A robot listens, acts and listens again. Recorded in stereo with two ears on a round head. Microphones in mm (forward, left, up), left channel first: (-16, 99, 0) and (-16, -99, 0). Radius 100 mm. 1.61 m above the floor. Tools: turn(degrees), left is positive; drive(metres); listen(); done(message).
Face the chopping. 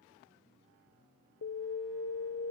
listen()
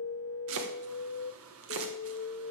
turn(degrees=-75)
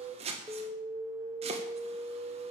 turn(degrees=-30)
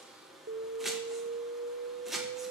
done("Found it: chopping, straight ahead, 1 to 2 m away.")